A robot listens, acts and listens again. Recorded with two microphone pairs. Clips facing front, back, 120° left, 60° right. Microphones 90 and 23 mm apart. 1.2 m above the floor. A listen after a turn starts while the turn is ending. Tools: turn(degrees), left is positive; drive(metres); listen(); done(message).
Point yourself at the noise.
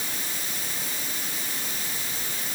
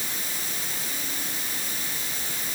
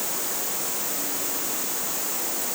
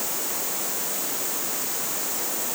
listen()
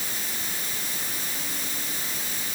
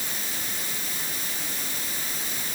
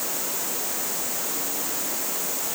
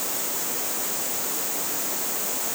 listen()
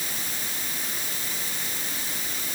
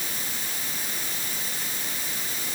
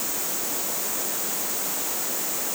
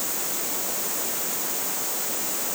done("I can't make out anything to turn to.")